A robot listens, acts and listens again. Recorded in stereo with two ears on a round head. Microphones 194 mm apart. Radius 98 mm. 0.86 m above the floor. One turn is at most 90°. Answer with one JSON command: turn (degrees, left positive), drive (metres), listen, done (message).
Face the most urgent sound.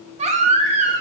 {"turn": -30}
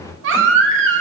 {"turn": -90}
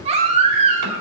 {"turn": -30}
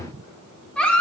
{"done": "Found it: a baby crying, straight ahead, 1 to 2 m away."}